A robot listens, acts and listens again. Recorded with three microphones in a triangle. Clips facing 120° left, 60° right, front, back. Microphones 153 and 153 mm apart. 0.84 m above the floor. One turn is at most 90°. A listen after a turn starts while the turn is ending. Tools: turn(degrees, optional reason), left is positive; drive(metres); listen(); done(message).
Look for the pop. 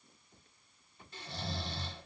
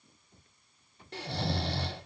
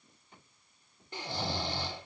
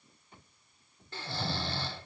listen()
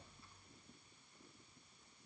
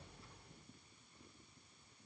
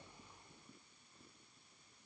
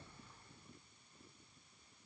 listen()
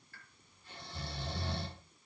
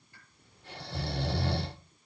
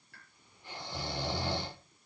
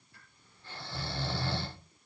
turn(degrees=15, reason="The pop: 15° left.")
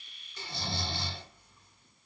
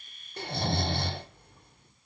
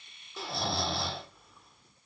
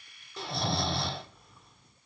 done("I heard a pop from this way, but can't make it out now.")